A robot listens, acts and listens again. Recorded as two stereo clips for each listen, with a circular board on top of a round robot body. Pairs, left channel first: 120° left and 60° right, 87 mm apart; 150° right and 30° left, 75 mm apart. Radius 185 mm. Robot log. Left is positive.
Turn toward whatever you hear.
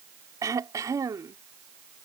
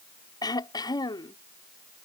note: The throat clearing: 115° right.
cmd yaw -115
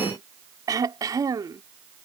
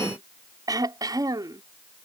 note: The throat clearing is now 10° right.
cmd yaw -10
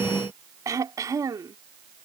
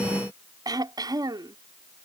end: Found it: throat clearing, straight ahead.